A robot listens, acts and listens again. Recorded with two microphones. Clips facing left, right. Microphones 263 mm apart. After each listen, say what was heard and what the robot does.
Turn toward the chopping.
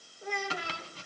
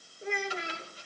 The chopping: about 75° left or 105° left. Turn 75° left.
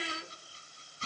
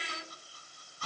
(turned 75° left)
So it is at 25° left. Turn 25° left.
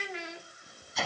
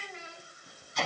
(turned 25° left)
Found it: chopping, straight ahead, 1 to 2 m away.